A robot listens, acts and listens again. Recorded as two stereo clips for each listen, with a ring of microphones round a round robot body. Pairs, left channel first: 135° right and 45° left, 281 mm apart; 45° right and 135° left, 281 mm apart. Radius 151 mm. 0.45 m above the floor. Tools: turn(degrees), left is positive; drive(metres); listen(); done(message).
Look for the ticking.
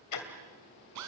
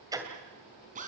turn(degrees=-145)
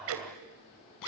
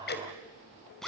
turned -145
turn(degrees=10)
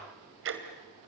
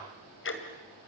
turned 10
done("Found it: ticking, straight ahead.")